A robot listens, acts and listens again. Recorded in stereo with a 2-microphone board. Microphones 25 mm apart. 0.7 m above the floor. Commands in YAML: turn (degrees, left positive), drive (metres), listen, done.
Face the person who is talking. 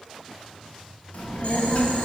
turn: 65
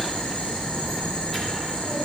turn: 15
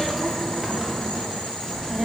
done: "Facing the child speaking, under 1 m away."